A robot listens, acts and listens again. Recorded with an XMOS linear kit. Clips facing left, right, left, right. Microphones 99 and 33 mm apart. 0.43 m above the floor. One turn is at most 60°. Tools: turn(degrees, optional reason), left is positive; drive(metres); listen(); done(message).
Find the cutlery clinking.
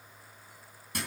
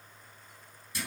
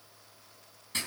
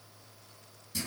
listen()
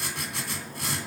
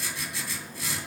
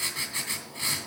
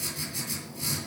listen()
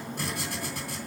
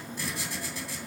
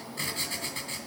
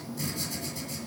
done("I can't make out cutlery clinking to turn to.")